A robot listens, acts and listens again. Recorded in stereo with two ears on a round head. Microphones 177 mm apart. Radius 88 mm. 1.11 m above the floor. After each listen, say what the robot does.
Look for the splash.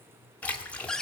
Turn 30° left.
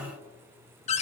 Keep listening.
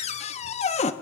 I heard a splash, but can't make it out now. It was about 25° right or 145° left.